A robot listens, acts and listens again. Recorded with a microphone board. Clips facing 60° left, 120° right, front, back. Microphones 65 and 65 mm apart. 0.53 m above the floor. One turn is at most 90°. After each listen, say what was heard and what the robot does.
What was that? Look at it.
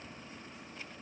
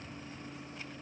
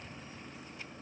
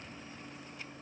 Keep listening.
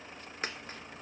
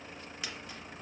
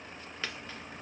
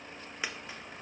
The dropped coin: 105° left. Turn 90° left.
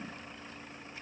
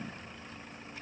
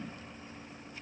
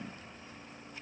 Nothing new. It was at 15° left. Turn 15° left.
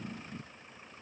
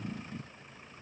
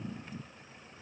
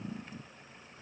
I heard a dropped coin from this way, but can't make it out now.